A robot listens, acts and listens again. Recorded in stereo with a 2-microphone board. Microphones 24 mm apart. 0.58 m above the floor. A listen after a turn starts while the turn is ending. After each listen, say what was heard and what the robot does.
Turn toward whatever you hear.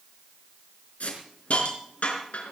Turn 90° left.
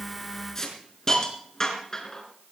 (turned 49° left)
So it is at 25° left. Turn 25° left.
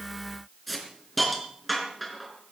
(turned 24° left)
Found it: a hiss, straight ahead.